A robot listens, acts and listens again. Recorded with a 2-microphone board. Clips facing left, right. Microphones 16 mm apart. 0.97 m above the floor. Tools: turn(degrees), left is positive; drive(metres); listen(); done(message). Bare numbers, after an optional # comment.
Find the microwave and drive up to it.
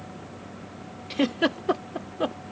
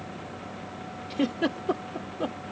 listen()
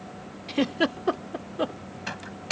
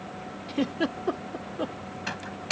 turn(-30)
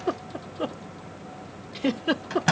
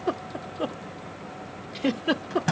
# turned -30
# So it is at 20° left.
turn(20)
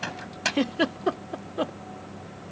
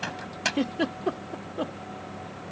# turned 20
drive(1.0)
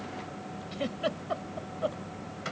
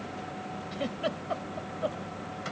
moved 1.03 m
listen()
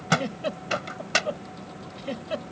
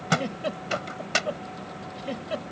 drive(1.0)
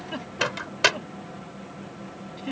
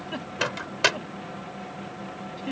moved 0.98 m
drive(1.0)
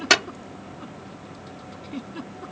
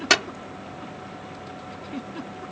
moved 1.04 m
drive(1.0)
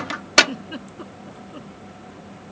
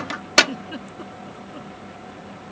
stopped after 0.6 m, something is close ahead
done("I am next to the microwave.")